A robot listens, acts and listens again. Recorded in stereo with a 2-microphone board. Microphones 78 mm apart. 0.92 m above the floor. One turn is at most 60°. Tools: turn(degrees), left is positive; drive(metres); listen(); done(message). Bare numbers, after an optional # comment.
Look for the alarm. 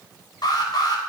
# The alarm: about 60° left or 120° left.
turn(60)
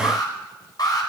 # So it is at 60° left.
turn(60)
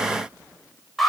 done("Facing the alarm.")